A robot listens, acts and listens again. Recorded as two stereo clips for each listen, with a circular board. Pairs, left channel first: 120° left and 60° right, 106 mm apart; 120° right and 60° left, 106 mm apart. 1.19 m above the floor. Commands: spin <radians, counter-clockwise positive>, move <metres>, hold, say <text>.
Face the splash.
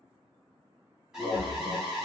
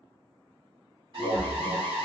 spin 1.13
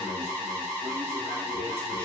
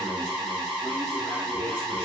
say Facing where the splash came from. I can't hear it now.